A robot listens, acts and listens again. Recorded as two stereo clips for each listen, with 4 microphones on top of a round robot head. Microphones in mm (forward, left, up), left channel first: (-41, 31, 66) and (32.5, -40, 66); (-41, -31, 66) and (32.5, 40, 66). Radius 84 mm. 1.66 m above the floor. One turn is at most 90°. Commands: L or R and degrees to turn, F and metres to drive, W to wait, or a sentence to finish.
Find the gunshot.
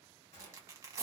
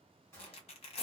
L90
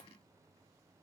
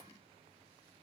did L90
L70
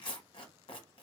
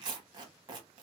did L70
I heard a gunshot from this way, but can't make it out now.